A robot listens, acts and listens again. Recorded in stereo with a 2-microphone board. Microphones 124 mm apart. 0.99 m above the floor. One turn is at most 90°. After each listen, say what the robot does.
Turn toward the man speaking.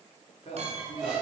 Turn 55° left.
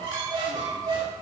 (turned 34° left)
Keep listening.
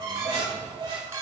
Keep listening.
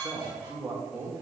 Turn 20° right.
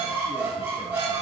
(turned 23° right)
Keep listening.
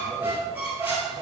Keep listening.
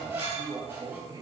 Turn 35° right.
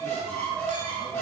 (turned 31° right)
Keep listening.
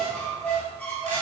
Keep listening.
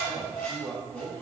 Facing the man speaking.